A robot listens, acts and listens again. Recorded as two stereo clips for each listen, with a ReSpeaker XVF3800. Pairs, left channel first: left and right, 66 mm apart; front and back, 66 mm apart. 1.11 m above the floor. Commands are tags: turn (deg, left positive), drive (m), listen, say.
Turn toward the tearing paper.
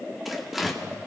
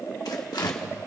<say>Facing the tearing paper.</say>